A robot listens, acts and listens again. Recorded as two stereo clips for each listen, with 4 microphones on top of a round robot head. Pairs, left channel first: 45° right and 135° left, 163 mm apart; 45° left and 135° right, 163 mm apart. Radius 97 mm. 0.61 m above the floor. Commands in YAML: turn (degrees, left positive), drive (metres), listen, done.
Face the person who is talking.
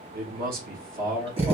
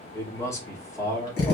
turn: 115
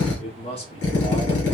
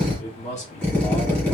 done: "Facing the man speaking."